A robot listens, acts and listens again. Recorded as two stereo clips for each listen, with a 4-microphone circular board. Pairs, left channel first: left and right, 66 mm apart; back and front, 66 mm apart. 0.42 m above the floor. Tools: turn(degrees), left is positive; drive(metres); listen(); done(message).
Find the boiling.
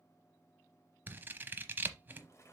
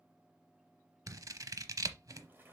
turn(degrees=60)
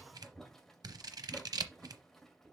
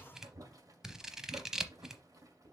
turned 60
done("Found it: boiling, straight ahead, 1 to 2 m away.")